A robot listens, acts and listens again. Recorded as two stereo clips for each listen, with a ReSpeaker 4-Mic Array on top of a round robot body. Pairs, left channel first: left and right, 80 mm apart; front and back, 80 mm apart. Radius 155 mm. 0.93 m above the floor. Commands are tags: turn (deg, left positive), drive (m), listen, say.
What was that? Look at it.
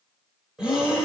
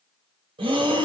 <turn deg="-175"/>
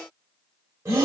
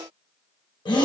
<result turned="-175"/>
<turn deg="-30"/>
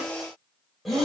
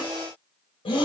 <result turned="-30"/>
<say>Facing the breathing, 1 to 2 m away.</say>